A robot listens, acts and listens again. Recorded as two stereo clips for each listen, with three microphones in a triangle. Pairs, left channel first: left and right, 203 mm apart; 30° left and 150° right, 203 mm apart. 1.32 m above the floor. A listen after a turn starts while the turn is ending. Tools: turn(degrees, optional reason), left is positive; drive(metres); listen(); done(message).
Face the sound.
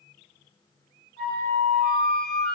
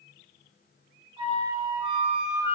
turn(degrees=-85, reason="The flute: 85° right.")
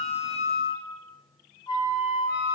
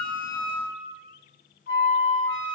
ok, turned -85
turn(degrees=25, reason="The flute is now 25° left.")
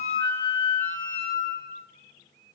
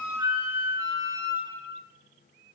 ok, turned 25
turn(degrees=15, reason="The flute is now 15° left.")
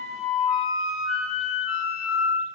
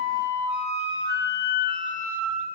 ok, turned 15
done("Facing the flute.")